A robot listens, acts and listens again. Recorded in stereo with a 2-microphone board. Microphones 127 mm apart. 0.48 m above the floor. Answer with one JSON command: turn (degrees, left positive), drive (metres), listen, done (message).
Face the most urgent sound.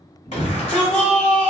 {"turn": 65}
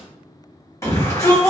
{"turn": 25}
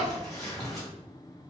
{"done": "Facing the shout."}